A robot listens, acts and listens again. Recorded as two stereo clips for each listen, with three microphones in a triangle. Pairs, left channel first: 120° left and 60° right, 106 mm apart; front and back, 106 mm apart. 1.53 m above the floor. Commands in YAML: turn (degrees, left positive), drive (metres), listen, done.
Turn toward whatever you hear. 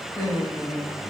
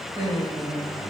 turn: 170
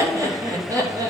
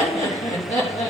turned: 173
done: "Found it: laughter, straight ahead."